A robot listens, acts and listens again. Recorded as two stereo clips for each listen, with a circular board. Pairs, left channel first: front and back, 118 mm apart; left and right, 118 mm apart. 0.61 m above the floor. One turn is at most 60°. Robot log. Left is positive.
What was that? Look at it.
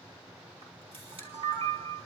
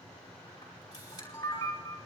note: The camera shutter: 145° left.
cmd yaw +60
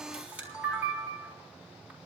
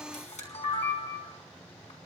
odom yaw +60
note: The camera shutter is now 105° left.
cmd yaw +60
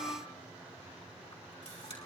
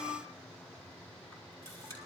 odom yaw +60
note: The camera shutter is now 25° left.
cmd yaw +25
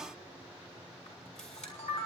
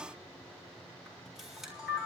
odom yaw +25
end: Facing the camera shutter.